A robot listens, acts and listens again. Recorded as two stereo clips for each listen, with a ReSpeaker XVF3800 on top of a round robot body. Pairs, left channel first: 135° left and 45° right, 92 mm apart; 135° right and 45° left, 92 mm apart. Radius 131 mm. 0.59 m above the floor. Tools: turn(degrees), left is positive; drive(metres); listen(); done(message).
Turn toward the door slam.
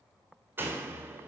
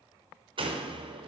turn(degrees=25)
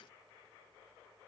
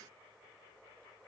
done("I heard a door slam from this way, but can't make it out now.")